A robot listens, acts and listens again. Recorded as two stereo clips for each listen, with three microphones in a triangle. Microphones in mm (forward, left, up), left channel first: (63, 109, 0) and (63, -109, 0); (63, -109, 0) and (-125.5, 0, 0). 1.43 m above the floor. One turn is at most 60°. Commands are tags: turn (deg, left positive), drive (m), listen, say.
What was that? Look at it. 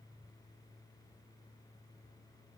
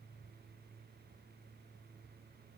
<listen/>
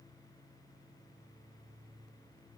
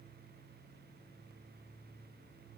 <listen/>
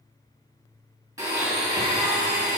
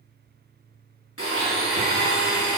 <turn deg="-15"/>
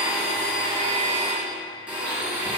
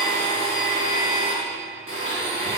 <say>Found it: a blender, straight ahead, 2 to 4 m away.</say>